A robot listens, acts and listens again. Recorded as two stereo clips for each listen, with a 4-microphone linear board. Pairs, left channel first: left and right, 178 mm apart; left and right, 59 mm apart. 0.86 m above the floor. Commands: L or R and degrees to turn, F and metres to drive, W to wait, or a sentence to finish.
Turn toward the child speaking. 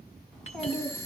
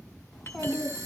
L30
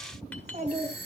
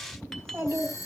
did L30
R45
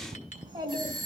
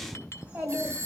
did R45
R30
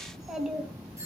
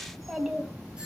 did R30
Found it: a child speaking, straight ahead, 2 to 4 m away.